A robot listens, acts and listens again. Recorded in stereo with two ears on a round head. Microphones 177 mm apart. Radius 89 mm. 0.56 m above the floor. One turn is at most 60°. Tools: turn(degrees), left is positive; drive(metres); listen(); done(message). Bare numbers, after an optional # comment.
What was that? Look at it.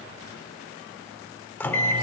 turn(30)
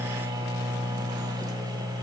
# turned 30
# So it is at 20° right.
turn(-20)
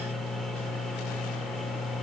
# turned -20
done("Facing the microwave.")